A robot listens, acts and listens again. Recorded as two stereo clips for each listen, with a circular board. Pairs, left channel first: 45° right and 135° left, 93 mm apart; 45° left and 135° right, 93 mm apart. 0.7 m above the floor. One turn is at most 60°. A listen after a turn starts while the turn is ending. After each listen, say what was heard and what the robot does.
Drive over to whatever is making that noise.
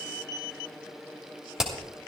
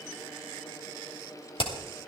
The hammering: 50° left. Turn 50° left.
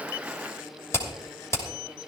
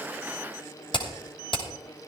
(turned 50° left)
The hammering is now 15° left. Turn 15° left.
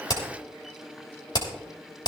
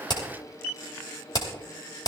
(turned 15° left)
Drive 1.0 m forward.
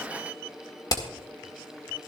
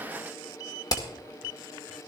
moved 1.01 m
Drive 1.0 m forward.
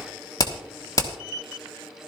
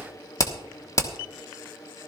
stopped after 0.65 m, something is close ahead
Arrived at the hammering, straight ahead.